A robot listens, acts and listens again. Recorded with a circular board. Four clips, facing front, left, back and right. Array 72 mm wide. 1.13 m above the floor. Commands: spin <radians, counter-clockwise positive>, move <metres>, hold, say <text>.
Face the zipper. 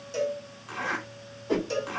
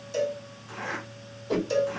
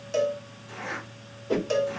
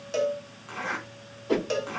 spin -0.70
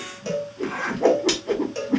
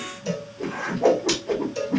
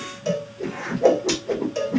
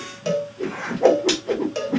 spin -0.17
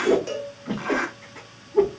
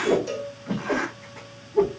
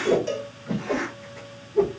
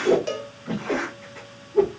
say Facing the zipper, 2 to 4 m away.